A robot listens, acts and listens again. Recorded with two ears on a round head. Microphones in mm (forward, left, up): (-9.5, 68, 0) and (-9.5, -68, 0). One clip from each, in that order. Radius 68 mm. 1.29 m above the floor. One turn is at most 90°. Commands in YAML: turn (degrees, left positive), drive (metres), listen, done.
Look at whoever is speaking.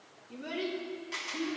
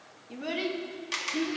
turn: -65
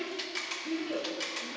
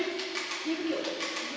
turn: -40
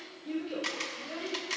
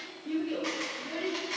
turn: 10
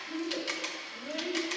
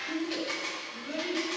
done: "Facing the child speaking."